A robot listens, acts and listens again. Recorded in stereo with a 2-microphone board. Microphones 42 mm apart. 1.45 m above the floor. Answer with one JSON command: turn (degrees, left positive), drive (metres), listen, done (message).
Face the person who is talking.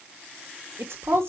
{"turn": -90}
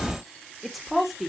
{"done": "Found it: a woman speaking, straight ahead."}